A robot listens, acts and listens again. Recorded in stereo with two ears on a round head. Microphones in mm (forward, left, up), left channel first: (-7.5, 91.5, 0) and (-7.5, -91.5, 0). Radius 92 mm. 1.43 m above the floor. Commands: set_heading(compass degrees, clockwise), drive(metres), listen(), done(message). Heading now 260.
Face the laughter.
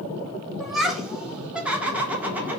set_heading(290)
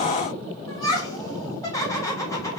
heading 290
set_heading(275)
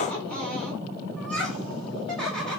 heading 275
done("Found it: laughter, straight ahead, over 4 m away.")